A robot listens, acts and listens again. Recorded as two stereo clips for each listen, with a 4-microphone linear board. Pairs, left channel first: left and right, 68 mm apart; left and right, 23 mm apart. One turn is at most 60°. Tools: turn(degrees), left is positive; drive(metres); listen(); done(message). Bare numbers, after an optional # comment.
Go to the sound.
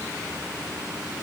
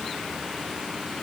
listen()
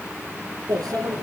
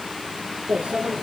# The microwave: about 70° right or 110° right.
turn(-60)
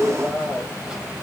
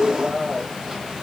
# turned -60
# So it is at 10° right.
turn(-10)
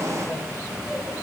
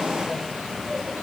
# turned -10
drive(1.0)
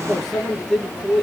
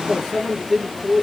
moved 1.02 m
drive(1.0)
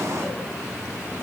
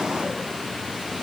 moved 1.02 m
listen()
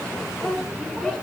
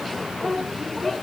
drive(1.0)
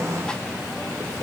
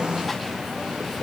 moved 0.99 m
# The microwave is now 10° left.
turn(10)
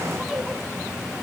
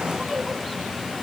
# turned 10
drive(1.0)
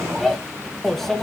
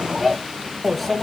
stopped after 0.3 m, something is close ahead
done("Arrived at the microwave, straight ahead.")